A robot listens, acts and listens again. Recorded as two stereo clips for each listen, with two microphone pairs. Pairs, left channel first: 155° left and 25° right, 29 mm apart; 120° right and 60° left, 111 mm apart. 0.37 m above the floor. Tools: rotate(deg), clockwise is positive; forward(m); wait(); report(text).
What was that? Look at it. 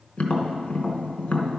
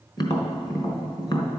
rotate(165)
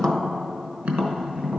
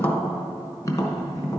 rotate(60)
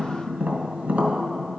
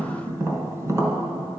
report("Found it: tapping, straight ahead.")